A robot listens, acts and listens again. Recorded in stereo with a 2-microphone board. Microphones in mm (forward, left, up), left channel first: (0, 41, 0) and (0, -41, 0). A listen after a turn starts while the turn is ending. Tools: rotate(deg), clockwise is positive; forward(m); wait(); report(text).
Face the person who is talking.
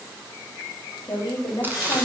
rotate(-55)
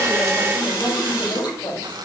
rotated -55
rotate(-65)
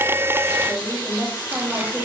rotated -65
report("Found it: a woman speaking, straight ahead, 2 to 4 m away.")